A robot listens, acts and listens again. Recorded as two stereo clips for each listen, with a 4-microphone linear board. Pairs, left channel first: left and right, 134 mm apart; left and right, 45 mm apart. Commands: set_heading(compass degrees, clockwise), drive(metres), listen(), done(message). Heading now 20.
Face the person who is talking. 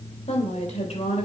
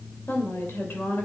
set_heading(325)
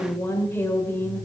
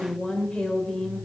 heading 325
set_heading(305)
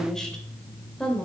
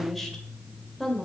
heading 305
done("Found it: a woman speaking, straight ahead, 2 to 4 m away.")